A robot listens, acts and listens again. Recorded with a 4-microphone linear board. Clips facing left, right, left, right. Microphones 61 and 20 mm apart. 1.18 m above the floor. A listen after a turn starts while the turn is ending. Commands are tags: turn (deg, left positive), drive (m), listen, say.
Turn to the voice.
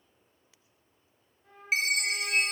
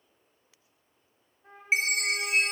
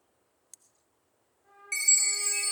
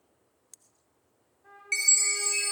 <listen/>
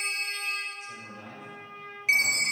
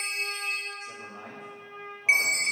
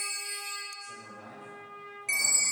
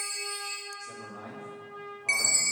<turn deg="-90"/>
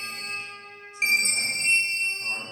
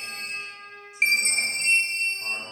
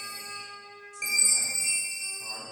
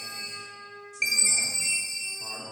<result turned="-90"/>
<turn deg="-10"/>
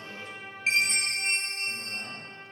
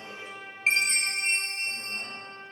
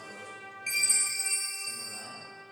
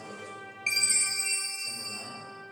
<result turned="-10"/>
<listen/>
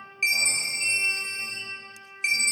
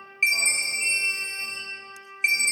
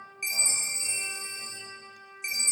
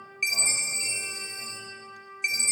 <listen/>
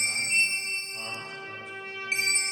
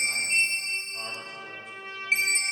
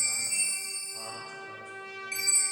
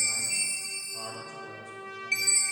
<say>I heard a man speaking from this way, but can't make it out now.</say>